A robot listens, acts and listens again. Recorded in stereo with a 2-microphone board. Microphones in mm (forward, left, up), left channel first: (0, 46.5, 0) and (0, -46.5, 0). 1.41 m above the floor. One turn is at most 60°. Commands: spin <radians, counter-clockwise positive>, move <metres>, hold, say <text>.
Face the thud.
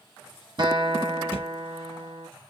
spin 0.52
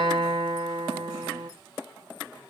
hold
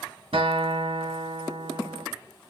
say I heard a thud, but can't make it out now. It was about straight ahead or 120° left.